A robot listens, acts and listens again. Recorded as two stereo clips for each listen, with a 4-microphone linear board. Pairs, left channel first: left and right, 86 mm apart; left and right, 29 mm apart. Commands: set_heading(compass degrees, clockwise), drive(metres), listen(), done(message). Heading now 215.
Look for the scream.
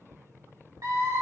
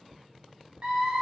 set_heading(255)
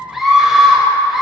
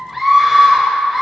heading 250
done("Found it: a scream, straight ahead.")